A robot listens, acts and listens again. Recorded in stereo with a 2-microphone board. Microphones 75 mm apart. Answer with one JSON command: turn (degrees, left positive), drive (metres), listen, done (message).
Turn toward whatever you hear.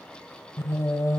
{"turn": 45}
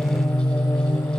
{"turn": 90}
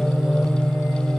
{"done": "Found it: singing, straight ahead."}